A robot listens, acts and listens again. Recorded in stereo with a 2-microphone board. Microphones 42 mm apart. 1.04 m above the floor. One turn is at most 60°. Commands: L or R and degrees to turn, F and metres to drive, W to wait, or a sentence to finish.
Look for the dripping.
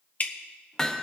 L45
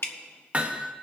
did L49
L60
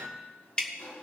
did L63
L25
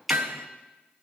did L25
Found it: dripping, straight ahead, 1 to 2 m away.